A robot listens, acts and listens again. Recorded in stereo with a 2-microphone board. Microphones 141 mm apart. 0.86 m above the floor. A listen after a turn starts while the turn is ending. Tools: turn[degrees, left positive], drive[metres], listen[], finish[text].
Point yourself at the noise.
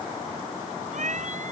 Thought: The cat meowing: about 65° right or 115° right.
Action: turn[-65]
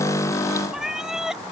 Action: finish[Facing the cat meowing.]